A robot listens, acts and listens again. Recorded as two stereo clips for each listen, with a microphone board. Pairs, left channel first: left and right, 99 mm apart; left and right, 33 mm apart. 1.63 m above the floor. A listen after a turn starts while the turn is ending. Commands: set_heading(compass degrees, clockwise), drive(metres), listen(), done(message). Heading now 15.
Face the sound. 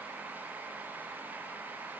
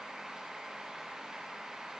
listen()
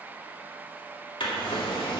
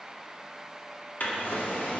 set_heading(320)
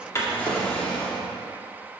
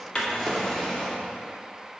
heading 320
set_heading(310)
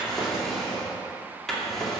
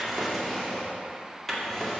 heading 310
done("Facing the drawer.")